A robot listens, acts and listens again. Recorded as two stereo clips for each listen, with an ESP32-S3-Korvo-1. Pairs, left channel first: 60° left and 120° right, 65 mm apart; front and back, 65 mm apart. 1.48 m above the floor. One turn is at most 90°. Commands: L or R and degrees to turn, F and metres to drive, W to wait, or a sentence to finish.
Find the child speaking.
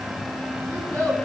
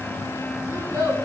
R90
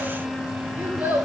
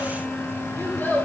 R60
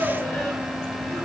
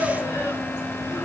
W
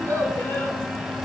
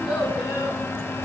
Facing the child speaking, over 4 m away.